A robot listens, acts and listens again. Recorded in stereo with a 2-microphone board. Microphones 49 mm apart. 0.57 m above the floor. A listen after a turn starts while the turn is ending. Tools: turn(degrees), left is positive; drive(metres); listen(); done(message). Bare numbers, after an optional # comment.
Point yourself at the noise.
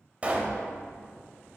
# The pop: about 30° right or 150° right.
turn(-30)
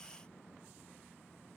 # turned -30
listen()
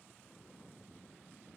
done("I heard a pop, but can't make it out now. It was about straight ahead or 120° right.")